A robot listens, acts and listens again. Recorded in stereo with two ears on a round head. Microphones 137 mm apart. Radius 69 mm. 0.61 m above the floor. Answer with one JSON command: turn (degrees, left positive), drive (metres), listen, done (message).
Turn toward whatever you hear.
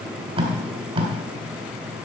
{"turn": -35}
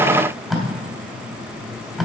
{"done": "Found it: tape being pulled, straight ahead."}